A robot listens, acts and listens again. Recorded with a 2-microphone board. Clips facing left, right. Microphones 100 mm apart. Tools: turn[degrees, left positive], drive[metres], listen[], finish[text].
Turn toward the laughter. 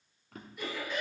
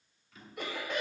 Action: turn[-90]
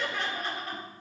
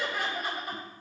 Thought: So it is at 15° right.
Action: turn[-15]
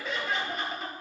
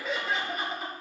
Action: finish[Facing the laughter, over 4 m away.]